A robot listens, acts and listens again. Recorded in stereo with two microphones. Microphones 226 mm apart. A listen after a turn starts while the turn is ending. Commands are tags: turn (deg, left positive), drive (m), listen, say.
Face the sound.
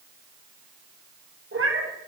<turn deg="-75"/>
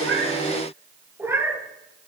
<turn deg="-10"/>
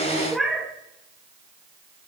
<say>Found it: a cat meowing, straight ahead, 1 to 2 m away.</say>